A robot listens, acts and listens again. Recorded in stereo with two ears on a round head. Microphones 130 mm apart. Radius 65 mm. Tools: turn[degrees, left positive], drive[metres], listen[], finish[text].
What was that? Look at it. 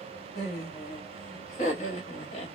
Thought: The laughter: about 45° left or 135° left.
Action: turn[45]
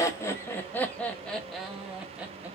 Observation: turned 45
Thought: So it is at 10° right.
Action: turn[-10]
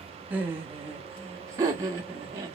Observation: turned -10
Thought: The laughter is now 25° right.
Action: turn[-25]
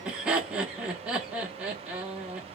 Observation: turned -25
Thought: The laughter is now 10° right.
Action: turn[-10]
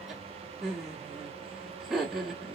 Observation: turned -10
Action: finish[Facing the laughter, 1 to 2 m away.]